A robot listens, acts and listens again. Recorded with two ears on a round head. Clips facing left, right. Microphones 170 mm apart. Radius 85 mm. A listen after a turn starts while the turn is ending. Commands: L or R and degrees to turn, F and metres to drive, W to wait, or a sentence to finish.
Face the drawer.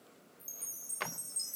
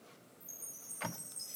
L70
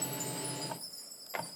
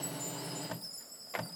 W
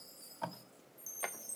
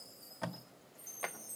W
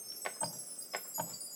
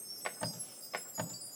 Found it: a drawer, straight ahead, under 1 m away.